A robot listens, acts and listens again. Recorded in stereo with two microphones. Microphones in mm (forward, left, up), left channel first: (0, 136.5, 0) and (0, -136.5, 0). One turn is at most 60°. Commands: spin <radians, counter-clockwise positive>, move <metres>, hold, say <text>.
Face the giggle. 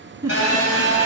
spin -0.52
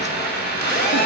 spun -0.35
hold
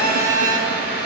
hold
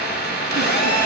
say I heard a giggle, but can't make it out now. It was about 5° left or 145° right.